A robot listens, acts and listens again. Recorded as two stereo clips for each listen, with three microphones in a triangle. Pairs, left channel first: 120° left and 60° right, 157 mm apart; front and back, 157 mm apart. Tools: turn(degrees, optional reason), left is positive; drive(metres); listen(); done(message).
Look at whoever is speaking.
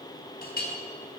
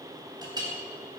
listen()
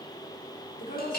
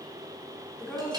turn(degrees=85, reason="The woman speaking: 85° left.")
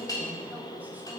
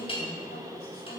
turn(degrees=20, reason="The woman speaking is now 20° left.")
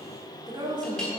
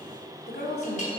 done("Found it: a woman speaking, straight ahead, 2 to 4 m away.")